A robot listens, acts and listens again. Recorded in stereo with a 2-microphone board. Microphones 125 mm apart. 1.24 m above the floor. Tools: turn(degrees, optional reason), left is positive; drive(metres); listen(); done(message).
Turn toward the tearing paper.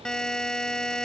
listen()
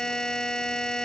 listen()
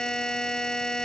done("I can't make out tearing paper to turn to.")